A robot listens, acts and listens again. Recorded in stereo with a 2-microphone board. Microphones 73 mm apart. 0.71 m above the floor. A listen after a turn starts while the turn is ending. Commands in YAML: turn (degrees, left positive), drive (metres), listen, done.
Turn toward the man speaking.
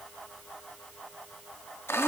listen: true
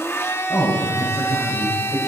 turn: 70
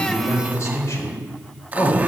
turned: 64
turn: 50
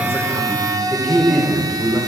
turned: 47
turn: 15
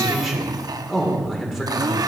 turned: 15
done: "Found it: a man speaking, straight ahead."